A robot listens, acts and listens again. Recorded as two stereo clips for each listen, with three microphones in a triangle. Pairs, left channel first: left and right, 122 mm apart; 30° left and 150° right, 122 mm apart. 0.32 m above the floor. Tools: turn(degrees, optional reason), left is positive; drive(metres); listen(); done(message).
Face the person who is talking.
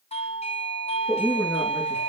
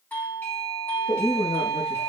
turn(degrees=10, reason="The woman speaking: 10° left.")
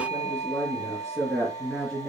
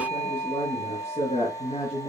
done("Found it: a woman speaking, straight ahead, over 4 m away.")